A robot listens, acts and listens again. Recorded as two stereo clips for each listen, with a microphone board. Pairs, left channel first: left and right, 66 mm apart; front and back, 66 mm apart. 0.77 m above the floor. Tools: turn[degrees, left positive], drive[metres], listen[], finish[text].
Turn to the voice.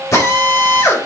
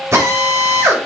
Action: listen[]
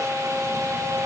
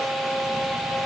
Action: listen[]
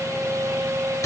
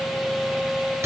Action: finish[I can't make out anyone speaking to turn to.]